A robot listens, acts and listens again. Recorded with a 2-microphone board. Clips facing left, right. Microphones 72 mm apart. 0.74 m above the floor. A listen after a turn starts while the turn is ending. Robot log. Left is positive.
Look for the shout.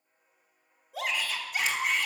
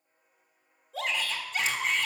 cmd yaw +30
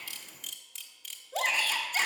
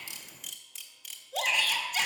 note: So it is at 140° left.
cmd yaw +140
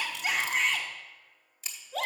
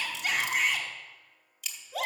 note: The shout is now 10° right.
cmd yaw -10
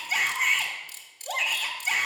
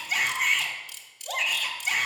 end: Found it: a shout, straight ahead.